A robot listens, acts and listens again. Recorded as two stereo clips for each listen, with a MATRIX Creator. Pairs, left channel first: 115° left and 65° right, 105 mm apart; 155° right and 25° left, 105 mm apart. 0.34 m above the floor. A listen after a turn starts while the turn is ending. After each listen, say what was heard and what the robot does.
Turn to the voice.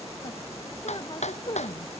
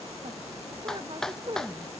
The woman speaking: 65° left. Turn 65° left.
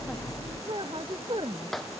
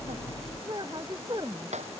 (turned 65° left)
The woman speaking is now 25° right. Turn 25° right.
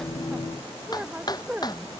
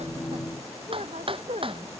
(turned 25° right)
The woman speaking is now 10° left. Turn 10° left.
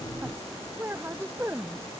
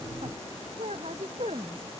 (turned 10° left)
Found it: a woman speaking, straight ahead.